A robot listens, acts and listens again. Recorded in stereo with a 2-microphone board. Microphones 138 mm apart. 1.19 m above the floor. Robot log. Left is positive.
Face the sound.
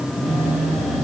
note: The phone buzzing: about 50° right or 130° right.
cmd yaw -50
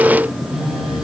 end: Facing the phone buzzing.